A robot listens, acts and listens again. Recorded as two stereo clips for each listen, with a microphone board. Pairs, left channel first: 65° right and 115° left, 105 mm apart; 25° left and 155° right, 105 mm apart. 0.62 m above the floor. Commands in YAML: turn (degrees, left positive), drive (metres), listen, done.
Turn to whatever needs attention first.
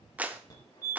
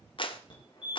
turn: -15
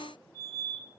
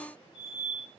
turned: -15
done: "Found it: a fire alarm, straight ahead, over 4 m away."